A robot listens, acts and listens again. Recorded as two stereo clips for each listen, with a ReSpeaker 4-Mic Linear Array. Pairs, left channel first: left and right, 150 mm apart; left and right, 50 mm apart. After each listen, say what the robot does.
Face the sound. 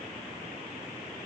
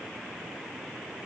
Keep listening.
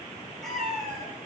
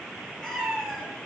Turn 30° left.
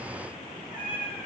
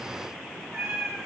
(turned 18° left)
Turn 30° right.
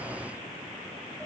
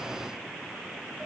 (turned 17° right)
Keep listening.
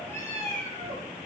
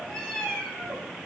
Turn 20° left.
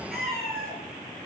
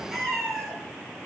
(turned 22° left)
Facing the cat meowing.